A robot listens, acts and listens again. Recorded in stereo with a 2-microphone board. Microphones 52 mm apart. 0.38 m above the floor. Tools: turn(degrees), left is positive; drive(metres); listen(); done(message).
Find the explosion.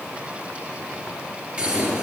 turn(degrees=-25)
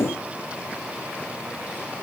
listen()
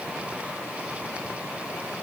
done("I heard an explosion, but can't make it out now. It was about straight ahead or 130° right.")